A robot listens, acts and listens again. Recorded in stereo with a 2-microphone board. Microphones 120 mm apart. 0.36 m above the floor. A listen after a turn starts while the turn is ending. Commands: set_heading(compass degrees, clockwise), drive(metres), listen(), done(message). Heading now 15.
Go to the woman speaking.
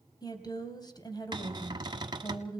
set_heading(340)
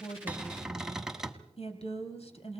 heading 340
set_heading(235)
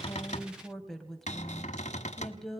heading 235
drive(1.0)
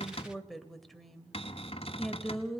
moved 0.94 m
drive(1.0)
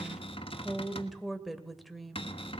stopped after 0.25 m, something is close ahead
done("I am next to the woman speaking.")